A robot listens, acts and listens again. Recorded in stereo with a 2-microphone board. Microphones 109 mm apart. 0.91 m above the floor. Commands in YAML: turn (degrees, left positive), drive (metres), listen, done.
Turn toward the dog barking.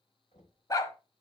turn: 30
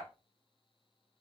listen: true
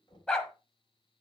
turn: 10
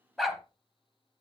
done: "Found it: a dog barking, straight ahead, 1 to 2 m away."